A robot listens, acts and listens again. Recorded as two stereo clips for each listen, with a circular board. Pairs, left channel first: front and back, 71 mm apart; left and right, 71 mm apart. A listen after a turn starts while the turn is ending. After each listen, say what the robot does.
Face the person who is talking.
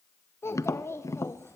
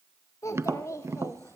Turn 50° left.
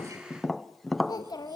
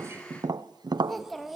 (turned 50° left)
Found it: a child speaking, straight ahead.